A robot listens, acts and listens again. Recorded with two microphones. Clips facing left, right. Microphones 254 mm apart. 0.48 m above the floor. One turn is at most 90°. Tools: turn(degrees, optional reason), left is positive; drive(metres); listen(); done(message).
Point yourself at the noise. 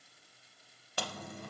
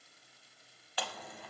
turn(degrees=50, reason="The chewing: about 50° left or 130° left.")
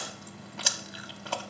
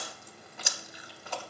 turn(degrees=80, reason="So it is at 80° left.")
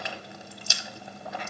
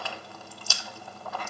turn(degrees=20, reason="The chewing is now 20° left.")
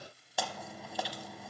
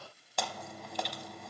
done("Facing the chewing.")